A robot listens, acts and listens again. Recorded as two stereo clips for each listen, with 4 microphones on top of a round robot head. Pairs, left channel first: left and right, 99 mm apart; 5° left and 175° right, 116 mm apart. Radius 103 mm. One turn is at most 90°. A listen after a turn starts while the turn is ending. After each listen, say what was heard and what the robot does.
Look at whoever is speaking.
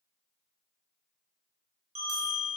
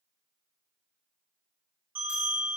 Keep listening.
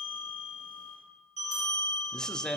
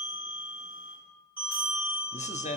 Found it: a man speaking, straight ahead, 1 to 2 m away.